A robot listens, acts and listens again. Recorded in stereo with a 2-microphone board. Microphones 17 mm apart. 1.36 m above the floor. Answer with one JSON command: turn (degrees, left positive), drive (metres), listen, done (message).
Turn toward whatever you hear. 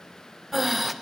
{"turn": -30}
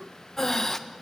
{"turn": 25}
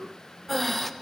{"turn": 10}
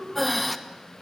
{"done": "Found it: breathing, straight ahead, 1 to 2 m away."}